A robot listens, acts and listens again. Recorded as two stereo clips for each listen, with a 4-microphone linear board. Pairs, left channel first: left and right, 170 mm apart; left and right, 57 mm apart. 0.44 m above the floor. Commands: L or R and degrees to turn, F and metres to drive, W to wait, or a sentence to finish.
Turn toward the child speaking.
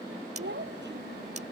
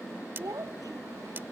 R90
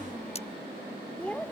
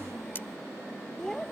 Found it: a child speaking, straight ahead.